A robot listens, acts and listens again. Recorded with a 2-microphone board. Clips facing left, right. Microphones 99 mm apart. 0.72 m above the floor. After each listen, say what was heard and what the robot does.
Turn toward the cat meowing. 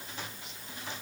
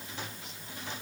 Keep listening.
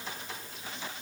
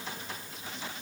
Keep listening.
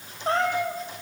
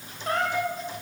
The cat meowing: about 25° left or 155° left. Turn 25° left.
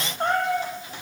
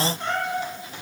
So it is at 135° left. Turn 135° left.
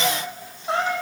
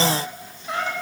The cat meowing is now 30° left. Turn 30° left.
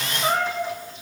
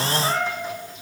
The cat meowing is now 10° left. Turn 10° left.
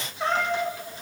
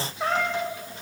Facing the cat meowing, over 4 m away.